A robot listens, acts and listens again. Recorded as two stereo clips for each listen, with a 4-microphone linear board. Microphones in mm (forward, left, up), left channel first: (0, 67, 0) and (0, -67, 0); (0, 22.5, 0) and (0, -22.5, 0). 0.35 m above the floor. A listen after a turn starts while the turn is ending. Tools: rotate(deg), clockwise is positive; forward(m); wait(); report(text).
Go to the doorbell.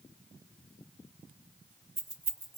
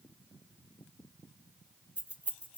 wait()
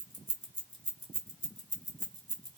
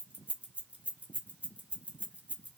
wait()
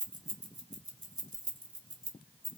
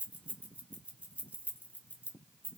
report("I can't make out a doorbell to turn to.")